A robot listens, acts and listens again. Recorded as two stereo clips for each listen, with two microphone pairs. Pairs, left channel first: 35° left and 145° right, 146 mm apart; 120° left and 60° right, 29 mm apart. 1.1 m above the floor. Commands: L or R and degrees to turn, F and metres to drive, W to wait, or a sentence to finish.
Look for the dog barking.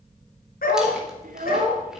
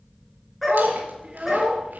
L35
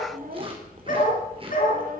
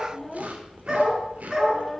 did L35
L15
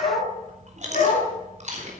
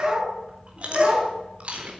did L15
Found it: a dog barking, straight ahead, over 4 m away.